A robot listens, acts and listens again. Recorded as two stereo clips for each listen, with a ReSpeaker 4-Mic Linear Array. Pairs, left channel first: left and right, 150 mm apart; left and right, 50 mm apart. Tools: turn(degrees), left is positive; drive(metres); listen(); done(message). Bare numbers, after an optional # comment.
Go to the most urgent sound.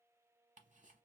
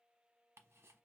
listen()
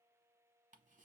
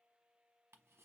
listen()
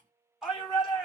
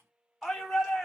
turn(30)
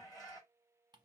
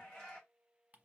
# So it is at 150° left.
turn(150)
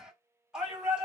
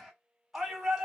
drive(1.0)
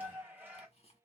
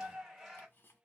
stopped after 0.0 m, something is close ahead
# The shout is now 15° right.
turn(-15)
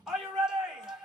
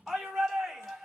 done("Something is in my way. I am facing the shout but have not reached it.")